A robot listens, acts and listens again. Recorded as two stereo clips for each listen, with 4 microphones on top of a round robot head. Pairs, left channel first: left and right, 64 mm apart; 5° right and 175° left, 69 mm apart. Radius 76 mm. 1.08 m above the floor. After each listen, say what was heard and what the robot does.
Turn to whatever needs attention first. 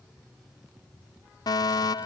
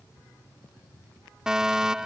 The fire alarm: 95° left. Turn 95° left.
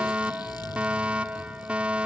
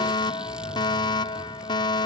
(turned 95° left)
The fire alarm is now 15° right. Turn 15° right.
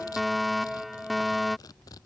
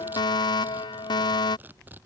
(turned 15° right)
Facing the fire alarm.